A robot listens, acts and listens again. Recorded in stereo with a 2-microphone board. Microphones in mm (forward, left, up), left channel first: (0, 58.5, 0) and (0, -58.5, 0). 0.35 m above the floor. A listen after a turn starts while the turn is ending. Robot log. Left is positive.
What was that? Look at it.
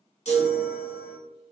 note: The chime: about 65° left or 115° left.
cmd yaw +65
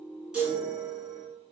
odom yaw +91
note: So it is at 25° right.
cmd yaw -25
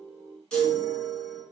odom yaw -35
note: The chime is now 10° left.
cmd yaw +10
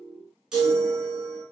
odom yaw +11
end: Found it: a chime, straight ahead, 1 to 2 m away.